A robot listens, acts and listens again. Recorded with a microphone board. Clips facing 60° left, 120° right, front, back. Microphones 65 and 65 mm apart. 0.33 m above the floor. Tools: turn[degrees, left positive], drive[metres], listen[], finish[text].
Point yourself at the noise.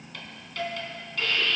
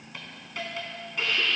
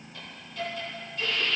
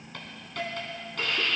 Thought: The hiss: 170° left.
Action: turn[170]
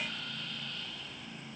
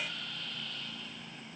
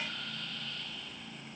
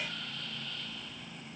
Action: listen[]
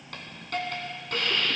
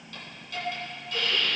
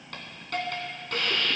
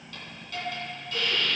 Thought: The hiss is now 30° left.
Action: turn[30]
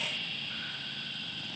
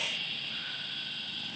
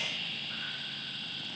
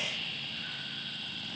Thought: The hiss is now 10° right.
Action: turn[-10]
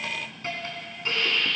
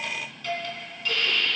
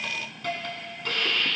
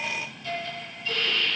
Action: finish[Found it: a hiss, straight ahead, 2 to 4 m away.]